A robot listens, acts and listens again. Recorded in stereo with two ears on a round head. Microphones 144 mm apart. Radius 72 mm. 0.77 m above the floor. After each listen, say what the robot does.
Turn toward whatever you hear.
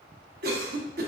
Turn 65° right.
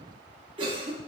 Turn 35° right.
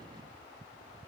Keep listening.
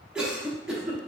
Found it: a cough, straight ahead, under 1 m away.